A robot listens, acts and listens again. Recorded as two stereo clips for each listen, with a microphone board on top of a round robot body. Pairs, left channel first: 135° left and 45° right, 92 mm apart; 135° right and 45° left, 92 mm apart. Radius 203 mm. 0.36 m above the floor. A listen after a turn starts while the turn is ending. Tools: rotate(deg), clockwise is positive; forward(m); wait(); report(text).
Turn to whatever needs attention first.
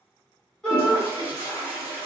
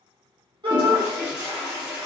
rotate(-55)
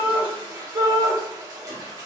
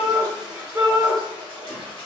rotate(10)
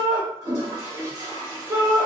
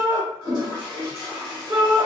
report("Facing the shout, 1 to 2 m away.")